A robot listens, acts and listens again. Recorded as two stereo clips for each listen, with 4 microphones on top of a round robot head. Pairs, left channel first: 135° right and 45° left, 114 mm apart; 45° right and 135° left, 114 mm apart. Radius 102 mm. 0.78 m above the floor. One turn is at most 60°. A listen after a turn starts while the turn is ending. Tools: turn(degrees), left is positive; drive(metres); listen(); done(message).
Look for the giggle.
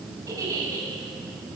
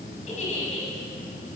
turn(degrees=-20)
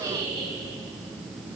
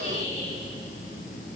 done("Facing the giggle, over 4 m away.")